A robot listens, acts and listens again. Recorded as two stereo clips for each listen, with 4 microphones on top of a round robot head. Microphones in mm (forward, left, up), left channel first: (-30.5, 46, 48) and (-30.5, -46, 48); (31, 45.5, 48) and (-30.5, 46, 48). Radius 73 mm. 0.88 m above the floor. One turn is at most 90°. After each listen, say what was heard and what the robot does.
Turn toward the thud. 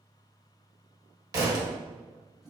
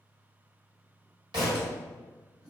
The thud: 145° right. Turn 90° right.
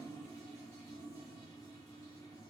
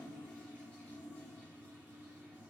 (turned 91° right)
Nothing new. It was at 55° right. Turn 55° right.
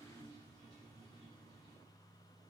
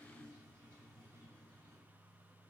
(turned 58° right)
I heard a thud from this way, but can't make it out now.